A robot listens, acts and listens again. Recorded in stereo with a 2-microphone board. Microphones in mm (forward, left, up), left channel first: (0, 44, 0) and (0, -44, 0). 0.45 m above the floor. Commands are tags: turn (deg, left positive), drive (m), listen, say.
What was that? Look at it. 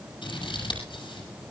<turn deg="65"/>
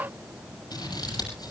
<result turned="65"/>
<turn deg="50"/>
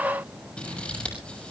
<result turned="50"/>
<turn deg="10"/>
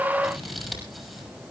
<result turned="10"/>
<say>Facing the scissors, over 4 m away.</say>